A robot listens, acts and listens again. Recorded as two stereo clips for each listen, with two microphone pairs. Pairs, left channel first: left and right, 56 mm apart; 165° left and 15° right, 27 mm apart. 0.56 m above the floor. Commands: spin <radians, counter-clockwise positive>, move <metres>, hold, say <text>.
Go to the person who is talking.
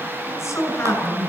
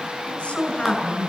spin 2.18
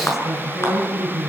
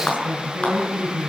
move 1.0
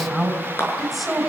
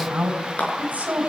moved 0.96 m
move 1.0
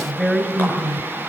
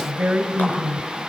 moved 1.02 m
spin 0.17
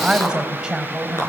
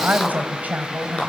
move 1.0
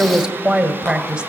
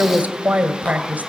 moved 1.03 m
spin -0.17
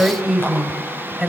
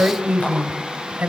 move 1.0
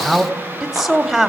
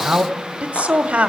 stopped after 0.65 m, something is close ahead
say I am next to the woman speaking.